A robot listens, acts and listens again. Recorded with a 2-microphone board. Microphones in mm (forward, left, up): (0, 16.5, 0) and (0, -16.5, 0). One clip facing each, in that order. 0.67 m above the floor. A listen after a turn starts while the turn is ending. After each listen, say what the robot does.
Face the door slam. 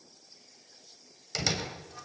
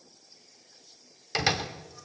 Turn 25° right.
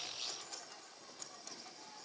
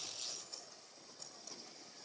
Keep listening.
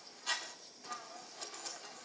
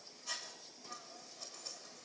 I heard a door slam, but can't make it out now. It was about straight ahead or 130° right.